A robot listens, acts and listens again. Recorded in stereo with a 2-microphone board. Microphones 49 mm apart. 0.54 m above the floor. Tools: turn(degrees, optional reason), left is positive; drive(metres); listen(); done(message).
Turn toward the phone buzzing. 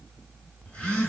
turn(degrees=20, reason="The phone buzzing: about 20° left or 160° left.")
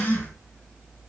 turn(degrees=140, reason="So it is at 140° left.")
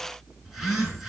done("Facing the phone buzzing.")